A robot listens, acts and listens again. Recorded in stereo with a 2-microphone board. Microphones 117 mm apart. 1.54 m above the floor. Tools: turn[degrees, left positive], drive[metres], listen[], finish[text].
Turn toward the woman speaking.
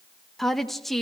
Action: turn[30]
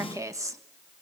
Thought: So it is at 25° right.
Action: turn[-25]
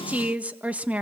Thought: The woman speaking is now 10° right.
Action: turn[-10]
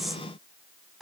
Action: finish[Facing the woman speaking, 1 to 2 m away.]